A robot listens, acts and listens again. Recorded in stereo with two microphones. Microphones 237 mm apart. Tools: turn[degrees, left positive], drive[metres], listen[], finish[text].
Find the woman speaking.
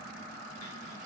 Action: listen[]
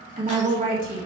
Thought: The woman speaking: about 35° right or 145° right.
Action: turn[-35]
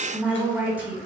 Action: finish[Facing the woman speaking, 2 to 4 m away.]